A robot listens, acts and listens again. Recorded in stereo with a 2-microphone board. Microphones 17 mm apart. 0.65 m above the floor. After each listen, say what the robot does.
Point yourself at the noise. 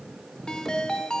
Turn 60° left.
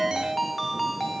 Turn 15° left.
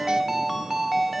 Found it: a ringtone, straight ahead, 1 to 2 m away.